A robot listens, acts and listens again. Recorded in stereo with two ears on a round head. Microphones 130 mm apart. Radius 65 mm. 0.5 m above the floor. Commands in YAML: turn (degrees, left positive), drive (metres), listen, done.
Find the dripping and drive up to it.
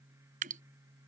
turn: -60
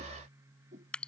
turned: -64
drive: 1.0
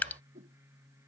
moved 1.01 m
turn: 10
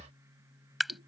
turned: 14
drive: 1.0
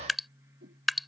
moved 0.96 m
drive: 1.0
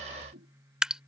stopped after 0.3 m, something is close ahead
done: "Arrived at the dripping, straight ahead."